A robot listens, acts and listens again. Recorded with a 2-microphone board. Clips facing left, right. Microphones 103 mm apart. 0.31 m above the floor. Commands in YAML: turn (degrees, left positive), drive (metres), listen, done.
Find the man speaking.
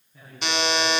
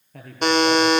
turn: -90
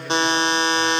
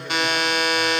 listen: true
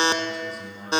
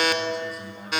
done: "Found it: a man speaking, straight ahead, over 4 m away."